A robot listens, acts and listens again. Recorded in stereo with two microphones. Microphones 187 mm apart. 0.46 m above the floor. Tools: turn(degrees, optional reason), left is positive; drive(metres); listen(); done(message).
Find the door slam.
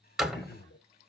turn(degrees=-30)
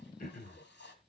listen()
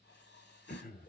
done("I heard a door slam, but can't make it out now. It was about 25° left or 145° right.")